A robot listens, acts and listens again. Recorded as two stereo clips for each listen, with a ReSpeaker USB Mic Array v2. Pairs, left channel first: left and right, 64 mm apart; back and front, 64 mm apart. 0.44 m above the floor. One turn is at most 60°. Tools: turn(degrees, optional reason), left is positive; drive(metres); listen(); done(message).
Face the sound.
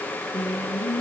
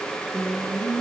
turn(degrees=60, reason="The singing: 90° left.")
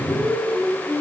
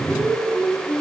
turn(degrees=20, reason="The singing is now 20° left.")
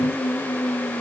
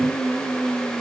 done("Found it: singing, straight ahead, over 4 m away.")